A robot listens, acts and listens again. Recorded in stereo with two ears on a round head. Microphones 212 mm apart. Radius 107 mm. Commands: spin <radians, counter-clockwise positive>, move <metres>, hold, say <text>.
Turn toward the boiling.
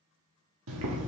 spin -1.13
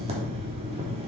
spin -0.52
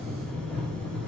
say Facing the boiling, 1 to 2 m away.